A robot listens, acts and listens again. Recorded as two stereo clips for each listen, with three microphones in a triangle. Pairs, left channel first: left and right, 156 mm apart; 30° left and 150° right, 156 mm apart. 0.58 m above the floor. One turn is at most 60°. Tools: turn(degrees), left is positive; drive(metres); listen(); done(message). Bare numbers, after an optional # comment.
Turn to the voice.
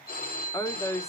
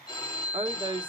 # The woman speaking: 160° left.
turn(60)
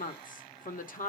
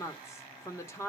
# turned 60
# The woman speaking is now 100° left.
turn(60)
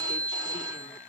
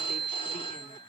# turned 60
# Nothing new. It was at 40° left.
turn(40)
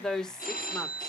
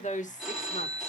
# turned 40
done("Found it: a woman speaking, straight ahead.")